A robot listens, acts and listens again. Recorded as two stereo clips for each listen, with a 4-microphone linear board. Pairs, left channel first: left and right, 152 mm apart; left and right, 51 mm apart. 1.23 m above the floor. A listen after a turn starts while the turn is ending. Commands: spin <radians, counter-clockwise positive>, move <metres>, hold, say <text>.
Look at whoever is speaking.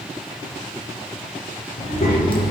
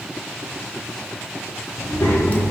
spin 1.31
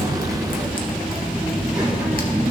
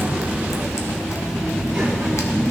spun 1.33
spin -0.35
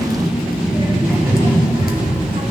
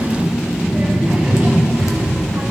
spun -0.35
spin -0.70
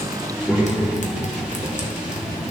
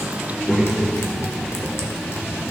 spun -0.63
say Facing the child speaking.